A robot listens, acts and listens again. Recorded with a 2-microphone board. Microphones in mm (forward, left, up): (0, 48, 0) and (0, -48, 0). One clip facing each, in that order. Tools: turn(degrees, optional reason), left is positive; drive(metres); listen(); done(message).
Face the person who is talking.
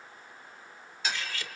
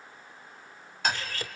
listen()
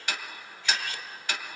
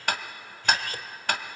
listen()
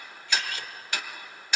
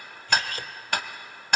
done("I can't make out anyone speaking, only ticking and cutlery clinking.")